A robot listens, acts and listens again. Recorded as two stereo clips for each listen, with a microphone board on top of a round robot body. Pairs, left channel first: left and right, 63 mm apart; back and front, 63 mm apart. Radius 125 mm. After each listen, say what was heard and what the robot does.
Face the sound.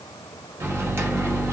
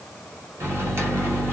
The microwave: 40° right. Turn 40° right.
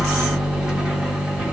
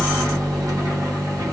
The microwave is now 10° right. Turn 10° right.
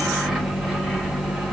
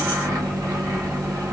Facing the microwave.